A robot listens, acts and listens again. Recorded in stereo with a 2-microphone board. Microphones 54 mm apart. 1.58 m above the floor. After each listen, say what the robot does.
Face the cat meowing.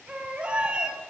Turn 20° right.
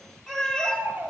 Turn 15° left.
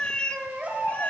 Turn 35° left.
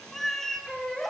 Turn 10° left.
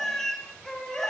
Turn 10° left.
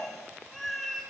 Found it: a cat meowing, straight ahead.